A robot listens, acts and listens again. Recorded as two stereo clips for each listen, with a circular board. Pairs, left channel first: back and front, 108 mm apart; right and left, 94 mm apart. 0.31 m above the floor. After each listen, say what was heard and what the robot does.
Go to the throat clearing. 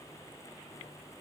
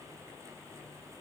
Keep listening.
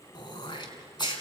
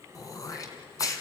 The throat clearing: 140° right. Turn 140° right.
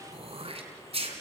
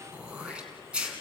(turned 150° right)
The throat clearing is now 10° left. Turn 10° left.
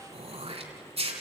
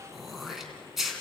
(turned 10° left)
Drive 1.0 m forward.
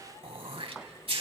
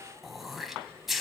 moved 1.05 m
Drive 1.0 m forward.
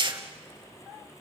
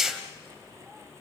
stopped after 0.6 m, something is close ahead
Arrived at the throat clearing, straight ahead.